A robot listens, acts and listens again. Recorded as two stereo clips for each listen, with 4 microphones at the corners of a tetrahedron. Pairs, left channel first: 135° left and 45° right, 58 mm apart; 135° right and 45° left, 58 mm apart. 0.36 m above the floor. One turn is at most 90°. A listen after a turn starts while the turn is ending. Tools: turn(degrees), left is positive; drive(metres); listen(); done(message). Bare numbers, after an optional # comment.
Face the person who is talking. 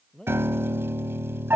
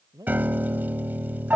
# The man speaking: 55° left.
turn(55)
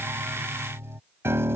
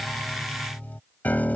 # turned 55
listen()
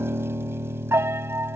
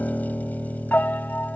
listen()
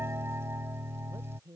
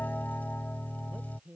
# The man speaking is now 25° right.
turn(-25)
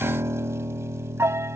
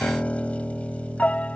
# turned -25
listen()
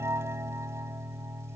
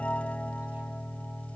listen()
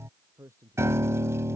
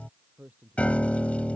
# The man speaking is now 15° right.
turn(-15)
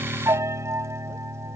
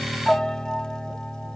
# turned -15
listen()
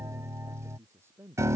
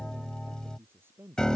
done("Facing the man speaking.")